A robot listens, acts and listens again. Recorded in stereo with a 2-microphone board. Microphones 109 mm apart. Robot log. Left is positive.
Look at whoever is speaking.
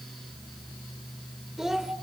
cmd yaw -30
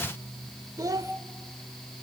note: So it is at 145° right.
cmd yaw -145
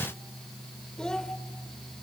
end: Found it: a child speaking, straight ahead, 1 to 2 m away.